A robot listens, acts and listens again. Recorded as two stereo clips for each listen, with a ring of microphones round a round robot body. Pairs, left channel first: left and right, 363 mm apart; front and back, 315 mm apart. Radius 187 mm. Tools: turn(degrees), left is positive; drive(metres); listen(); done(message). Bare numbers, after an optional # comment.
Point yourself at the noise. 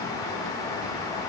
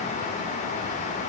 listen()
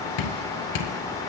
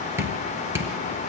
# The dripping: 100° left.
turn(100)
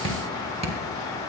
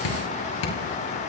# The dripping is now 15° right.
turn(-15)
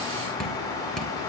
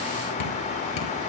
done("Facing the dripping.")